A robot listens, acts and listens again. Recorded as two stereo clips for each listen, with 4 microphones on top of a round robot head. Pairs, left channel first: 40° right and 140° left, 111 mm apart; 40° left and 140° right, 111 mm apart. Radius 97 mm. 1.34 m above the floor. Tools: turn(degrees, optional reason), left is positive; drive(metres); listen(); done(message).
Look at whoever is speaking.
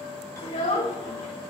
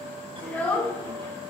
turn(degrees=-30, reason="The child speaking: 30° right.")
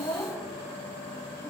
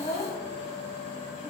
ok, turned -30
done("Facing the child speaking, 2 to 4 m away.")